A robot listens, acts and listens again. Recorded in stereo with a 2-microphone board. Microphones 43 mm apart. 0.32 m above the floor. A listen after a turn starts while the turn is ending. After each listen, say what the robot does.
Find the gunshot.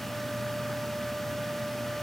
Keep listening.
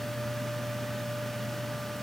Keep listening.
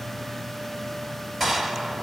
Turn 30° right.
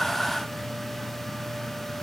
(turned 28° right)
Keep listening.
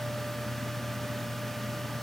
I heard a gunshot, but can't make it out now. It was about 25° left or 150° right.